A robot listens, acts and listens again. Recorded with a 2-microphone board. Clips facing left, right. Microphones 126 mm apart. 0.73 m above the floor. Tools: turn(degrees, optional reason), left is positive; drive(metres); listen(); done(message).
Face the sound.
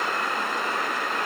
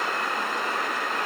listen()
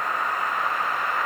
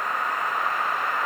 listen()
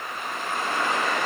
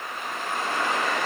done("I can't make out anything to turn to.")